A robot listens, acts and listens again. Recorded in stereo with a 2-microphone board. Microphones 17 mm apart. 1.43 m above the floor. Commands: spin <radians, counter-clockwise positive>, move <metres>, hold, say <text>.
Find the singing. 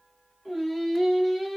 spin 0.52
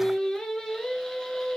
spin 2.53
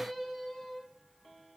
say Found it: singing, straight ahead.